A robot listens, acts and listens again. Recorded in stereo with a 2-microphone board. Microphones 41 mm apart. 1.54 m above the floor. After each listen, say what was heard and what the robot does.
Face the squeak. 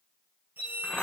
The squeak: about 55° right or 125° right. Turn 55° right.
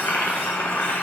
Keep listening.
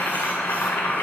Keep listening.
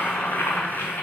I heard a squeak, but can't make it out now. It was about straight ahead or 70° right.